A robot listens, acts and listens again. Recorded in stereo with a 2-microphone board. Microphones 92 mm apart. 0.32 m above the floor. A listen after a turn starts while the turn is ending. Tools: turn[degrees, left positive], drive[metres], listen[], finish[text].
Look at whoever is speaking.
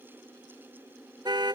Action: listen[]
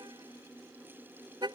Action: listen[]
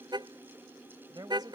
Thought: The woman speaking: about 45° right or 135° right.
Action: turn[-45]
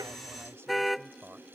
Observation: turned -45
Thought: So it is at 15° right.
Action: turn[-15]
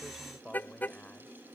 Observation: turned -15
Thought: The woman speaking is now 15° left.
Action: turn[15]
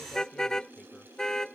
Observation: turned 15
Action: listen[]
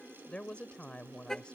Thought: The woman speaking is now 10° left.
Action: turn[10]
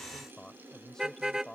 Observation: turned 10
Action: finish[Facing the woman speaking.]